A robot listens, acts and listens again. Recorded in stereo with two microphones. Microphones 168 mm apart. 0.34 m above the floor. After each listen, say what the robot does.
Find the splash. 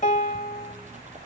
Turn 45° right.
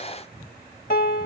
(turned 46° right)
Keep listening.
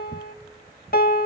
I heard a splash, but can't make it out now. It was about straight ahead or 90° right.